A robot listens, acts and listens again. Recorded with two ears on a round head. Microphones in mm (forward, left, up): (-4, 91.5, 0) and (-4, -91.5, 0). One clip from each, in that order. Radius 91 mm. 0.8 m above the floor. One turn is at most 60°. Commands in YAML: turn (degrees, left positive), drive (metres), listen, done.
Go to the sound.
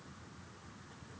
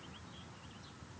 listen: true
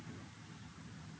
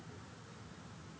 listen: true
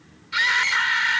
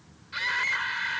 turn: 55
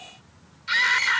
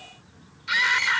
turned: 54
drive: 1.0
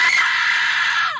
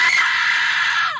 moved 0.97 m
drive: 1.0
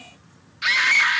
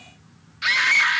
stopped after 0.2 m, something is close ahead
done: "Arrived at the scream, straight ahead."